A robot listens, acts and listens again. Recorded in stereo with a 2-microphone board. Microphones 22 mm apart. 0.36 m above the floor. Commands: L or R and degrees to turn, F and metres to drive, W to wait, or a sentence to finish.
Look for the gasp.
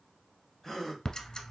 L30
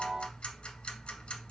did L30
W
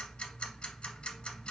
I heard a gasp, but can't make it out now. It was about 20° right or 140° left.